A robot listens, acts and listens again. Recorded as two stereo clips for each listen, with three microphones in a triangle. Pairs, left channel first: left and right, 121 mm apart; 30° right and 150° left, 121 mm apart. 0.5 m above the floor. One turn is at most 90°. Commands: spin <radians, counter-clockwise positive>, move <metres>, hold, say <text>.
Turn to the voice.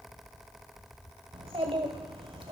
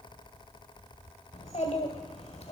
spin -0.87
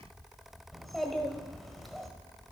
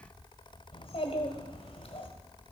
say Found it: a child speaking, straight ahead, 1 to 2 m away.